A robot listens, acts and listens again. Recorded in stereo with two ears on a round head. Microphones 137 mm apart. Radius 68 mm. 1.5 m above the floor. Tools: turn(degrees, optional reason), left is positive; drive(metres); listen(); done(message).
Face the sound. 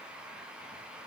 listen()
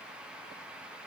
listen()
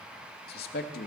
turn(degrees=65, reason="The man speaking: about 65° left or 115° left.")
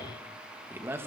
turn(degrees=-15, reason="So it is at 15° right.")
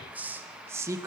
turn(degrees=-20, reason="The man speaking is now 20° right.")
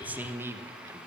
turn(degrees=-20, reason="The man speaking is now 20° right.")
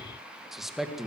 done("Facing the man speaking.")